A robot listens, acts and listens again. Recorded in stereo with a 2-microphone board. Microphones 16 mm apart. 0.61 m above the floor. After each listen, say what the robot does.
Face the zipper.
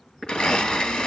Turn 60° left.
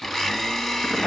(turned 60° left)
Keep listening.
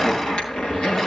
Turn 60° left.
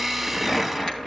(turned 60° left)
Turn 30° left.
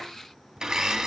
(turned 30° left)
Keep listening.
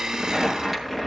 Turn 15° right.
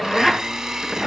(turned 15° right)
Found it: a zipper, straight ahead, over 4 m away.